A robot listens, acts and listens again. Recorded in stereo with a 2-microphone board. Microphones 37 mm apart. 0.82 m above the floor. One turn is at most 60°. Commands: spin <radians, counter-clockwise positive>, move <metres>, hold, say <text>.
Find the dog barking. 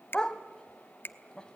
spin 0.35
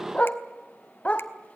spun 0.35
spin 1.05
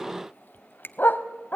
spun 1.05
spin 1.05
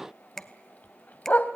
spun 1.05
spin 0.96
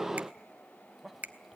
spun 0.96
hold
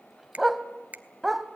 say Facing the dog barking.